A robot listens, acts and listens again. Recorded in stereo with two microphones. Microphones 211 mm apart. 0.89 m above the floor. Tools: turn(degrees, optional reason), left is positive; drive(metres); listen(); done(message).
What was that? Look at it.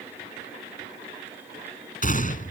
turn(degrees=40, reason="The gunshot: about 40° left or 140° left.")
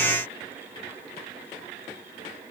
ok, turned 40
listen()
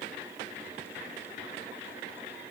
done("I heard a gunshot, but can't make it out now. It was about straight ahead or 100° left.")